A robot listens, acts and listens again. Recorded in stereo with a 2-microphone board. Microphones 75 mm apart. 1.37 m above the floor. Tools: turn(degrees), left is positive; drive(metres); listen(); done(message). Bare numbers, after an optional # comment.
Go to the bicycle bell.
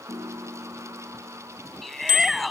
turn(90)
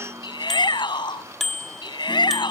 drive(1.0)
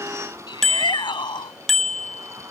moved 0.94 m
drive(1.0)
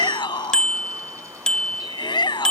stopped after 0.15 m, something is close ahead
# The bicycle bell is now 10° left.
turn(10)
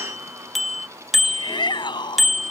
done("I am next to the bicycle bell.")